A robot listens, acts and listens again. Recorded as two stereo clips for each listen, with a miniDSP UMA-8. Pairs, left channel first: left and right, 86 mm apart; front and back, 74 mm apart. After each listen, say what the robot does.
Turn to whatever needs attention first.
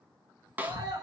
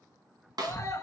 Turn 50° right.
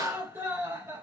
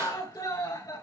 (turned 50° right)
Turn 30° right.
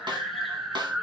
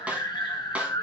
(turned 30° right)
Facing the scream, 2 to 4 m away.